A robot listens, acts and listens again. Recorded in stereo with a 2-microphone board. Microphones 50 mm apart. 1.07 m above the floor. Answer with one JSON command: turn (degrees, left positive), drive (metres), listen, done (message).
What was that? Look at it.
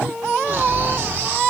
{"turn": -45}
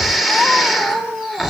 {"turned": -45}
{"done": "Found it: snoring, straight ahead, 2 to 4 m away."}